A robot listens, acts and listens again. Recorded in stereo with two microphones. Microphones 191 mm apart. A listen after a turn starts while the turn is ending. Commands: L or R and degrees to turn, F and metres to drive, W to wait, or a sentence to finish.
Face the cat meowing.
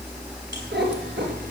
R65
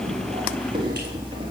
R25
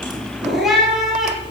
Facing the cat meowing, 2 to 4 m away.